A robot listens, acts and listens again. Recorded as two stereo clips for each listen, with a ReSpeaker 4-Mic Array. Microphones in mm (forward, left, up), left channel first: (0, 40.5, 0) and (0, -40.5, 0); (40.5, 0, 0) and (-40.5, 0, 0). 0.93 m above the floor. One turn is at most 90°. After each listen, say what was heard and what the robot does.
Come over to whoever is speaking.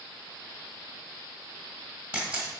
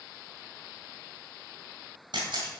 Keep listening.
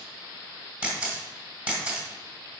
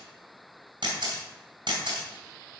Keep listening.
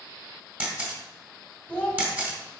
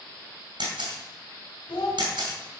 The child speaking: 20° left. Turn 20° left.
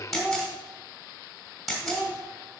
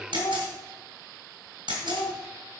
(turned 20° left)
Drive 1.0 m forward.
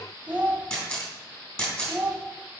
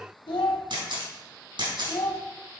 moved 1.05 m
The child speaking is now 15° right. Turn 15° right.
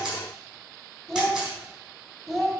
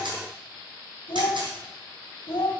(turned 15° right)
Drive 1.0 m forward.
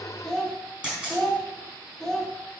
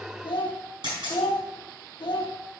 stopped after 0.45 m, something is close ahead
The child speaking is now 10° left. Turn 10° left.
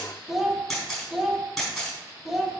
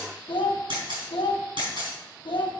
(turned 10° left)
Arrived at the child speaking, straight ahead.